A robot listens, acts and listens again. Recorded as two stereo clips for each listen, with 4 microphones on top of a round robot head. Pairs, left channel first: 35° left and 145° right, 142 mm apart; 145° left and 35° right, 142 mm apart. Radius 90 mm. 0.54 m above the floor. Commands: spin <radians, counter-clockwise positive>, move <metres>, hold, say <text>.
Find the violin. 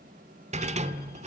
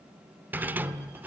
hold
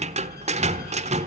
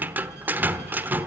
hold
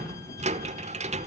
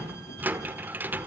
say I can't make out a violin to turn to.